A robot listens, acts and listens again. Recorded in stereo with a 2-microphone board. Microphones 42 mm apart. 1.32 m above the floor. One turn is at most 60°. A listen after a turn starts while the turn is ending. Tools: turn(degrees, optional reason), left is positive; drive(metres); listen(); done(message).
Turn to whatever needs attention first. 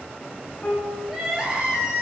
turn(degrees=-15, reason="The crying: about 15° right or 165° right.")
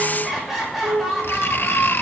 done("Found it: crying, straight ahead, over 4 m away.")